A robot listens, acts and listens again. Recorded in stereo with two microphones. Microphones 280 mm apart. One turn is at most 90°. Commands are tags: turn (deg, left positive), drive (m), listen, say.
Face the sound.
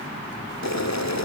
<turn deg="70"/>
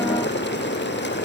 <turn deg="40"/>
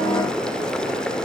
<say>Found it: boiling, straight ahead.</say>